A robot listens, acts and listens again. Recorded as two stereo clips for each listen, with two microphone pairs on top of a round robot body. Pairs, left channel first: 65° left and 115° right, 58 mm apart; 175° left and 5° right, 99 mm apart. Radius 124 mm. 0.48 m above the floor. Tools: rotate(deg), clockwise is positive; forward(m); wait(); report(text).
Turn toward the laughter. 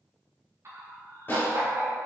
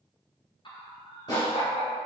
rotate(160)
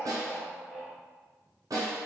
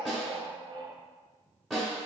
rotate(35)
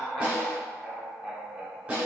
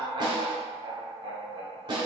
rotate(35)
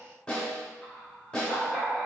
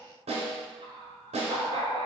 report("Found it: laughter, straight ahead.")